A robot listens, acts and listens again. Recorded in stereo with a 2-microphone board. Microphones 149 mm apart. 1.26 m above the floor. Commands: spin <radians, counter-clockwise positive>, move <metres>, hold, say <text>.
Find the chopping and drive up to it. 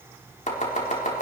spin 0.96
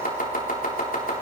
spin 1.22
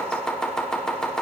move 1.0
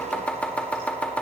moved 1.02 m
spin 0.17
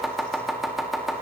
move 1.0
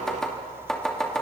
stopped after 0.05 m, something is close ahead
say Blocked. The chopping is further on, straight ahead.